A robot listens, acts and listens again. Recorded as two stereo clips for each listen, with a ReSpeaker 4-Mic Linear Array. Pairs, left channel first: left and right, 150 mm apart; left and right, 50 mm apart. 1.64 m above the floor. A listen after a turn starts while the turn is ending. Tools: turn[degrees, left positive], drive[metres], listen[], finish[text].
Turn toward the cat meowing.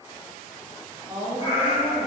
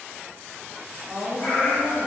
Thought: The cat meowing: about 40° left or 140° left.
Action: turn[40]
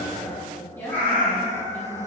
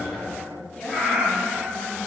Thought: So it is at 20° left.
Action: turn[20]
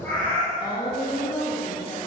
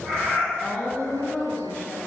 Thought: The cat meowing is now 10° left.
Action: turn[10]
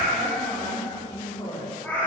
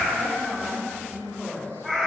Thought: The cat meowing is now 10° left.
Action: turn[10]
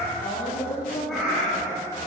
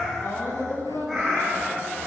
Action: finish[Found it: a cat meowing, straight ahead, 2 to 4 m away.]